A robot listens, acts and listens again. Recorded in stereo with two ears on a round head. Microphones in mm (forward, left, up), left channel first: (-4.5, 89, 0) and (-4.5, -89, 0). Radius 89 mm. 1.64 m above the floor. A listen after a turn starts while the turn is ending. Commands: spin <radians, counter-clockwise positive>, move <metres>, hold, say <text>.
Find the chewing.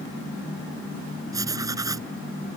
hold
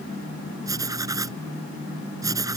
hold
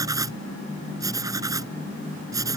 say I can't make out chewing, only writing.